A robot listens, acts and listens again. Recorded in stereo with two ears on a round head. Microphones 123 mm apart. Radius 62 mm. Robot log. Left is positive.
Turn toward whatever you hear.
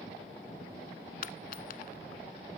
note: The dropped coin: about 65° left or 115° left.
cmd yaw +65
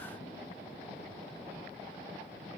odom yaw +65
cmd idle
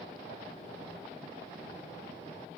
end: I heard a dropped coin, but can't make it out now. It was about straight ahead or 50° left.